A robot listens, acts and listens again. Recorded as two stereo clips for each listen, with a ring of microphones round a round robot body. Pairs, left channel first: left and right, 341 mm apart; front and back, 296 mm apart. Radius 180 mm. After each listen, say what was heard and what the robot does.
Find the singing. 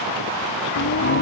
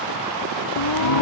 The singing: 25° left. Turn 25° left.
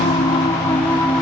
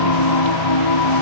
Found it: singing, straight ahead.